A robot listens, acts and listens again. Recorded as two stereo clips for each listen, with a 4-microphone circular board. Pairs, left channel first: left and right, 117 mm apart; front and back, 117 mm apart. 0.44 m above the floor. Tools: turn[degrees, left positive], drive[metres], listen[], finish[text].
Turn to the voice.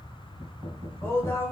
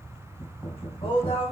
Thought: The woman speaking: 25° left.
Action: turn[25]
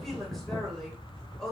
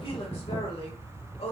Action: finish[Facing the woman speaking.]